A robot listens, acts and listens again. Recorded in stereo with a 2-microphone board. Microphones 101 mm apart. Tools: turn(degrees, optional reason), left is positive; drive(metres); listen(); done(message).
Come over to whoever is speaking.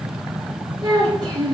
turn(degrees=-50, reason="The child speaking: about 50° right or 130° right.")
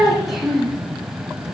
drive(metres=1.0)
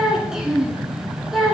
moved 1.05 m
drive(metres=1.0)
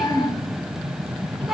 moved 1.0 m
drive(metres=1.0)
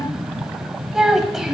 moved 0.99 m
drive(metres=1.0)
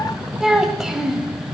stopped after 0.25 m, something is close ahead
done("I am next to the child speaking.")